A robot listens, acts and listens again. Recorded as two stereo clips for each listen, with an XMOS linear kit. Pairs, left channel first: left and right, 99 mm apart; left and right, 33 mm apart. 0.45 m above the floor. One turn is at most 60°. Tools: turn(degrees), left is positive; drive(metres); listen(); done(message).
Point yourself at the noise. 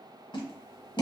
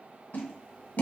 turn(degrees=55)
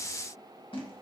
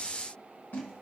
listen()
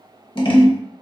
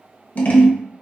turn(degrees=60)
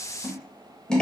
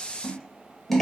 turn(degrees=10)
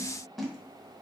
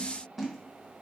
listen()
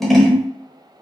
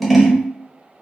done("Facing the scissors.")